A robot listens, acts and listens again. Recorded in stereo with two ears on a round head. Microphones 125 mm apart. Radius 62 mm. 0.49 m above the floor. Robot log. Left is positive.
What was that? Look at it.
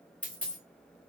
cmd yaw +30
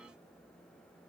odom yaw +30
cmd idle
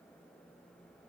end: I heard a dropped coin, but can't make it out now. It was about 20° right or 140° left.